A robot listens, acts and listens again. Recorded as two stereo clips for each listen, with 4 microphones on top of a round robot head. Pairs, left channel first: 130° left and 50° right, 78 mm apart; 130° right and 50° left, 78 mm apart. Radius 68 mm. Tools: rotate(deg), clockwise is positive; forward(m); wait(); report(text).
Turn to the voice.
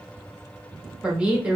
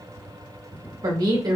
rotate(-25)
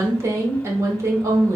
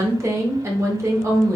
report("Facing the woman speaking.")